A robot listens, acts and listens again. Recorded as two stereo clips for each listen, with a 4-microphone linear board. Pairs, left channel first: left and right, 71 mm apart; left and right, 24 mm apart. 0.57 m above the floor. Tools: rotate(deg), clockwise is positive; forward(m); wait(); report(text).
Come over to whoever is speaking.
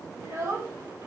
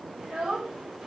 rotate(45)
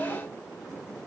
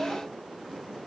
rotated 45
wait()
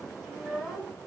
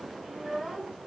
forward(1.0)
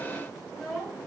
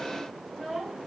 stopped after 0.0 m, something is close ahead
report("Something is in my way. I am facing the child speaking but have not reached it.")